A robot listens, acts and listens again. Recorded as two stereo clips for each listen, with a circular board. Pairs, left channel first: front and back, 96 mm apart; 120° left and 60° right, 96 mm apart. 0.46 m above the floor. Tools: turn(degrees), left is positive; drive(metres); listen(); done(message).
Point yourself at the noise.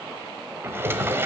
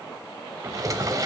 turn(degrees=-115)
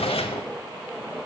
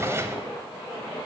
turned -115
done("Facing the drawer.")